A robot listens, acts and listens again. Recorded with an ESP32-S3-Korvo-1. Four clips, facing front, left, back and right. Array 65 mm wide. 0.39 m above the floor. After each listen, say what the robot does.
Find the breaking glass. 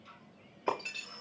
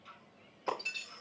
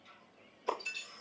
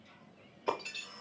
Facing the breaking glass, over 4 m away.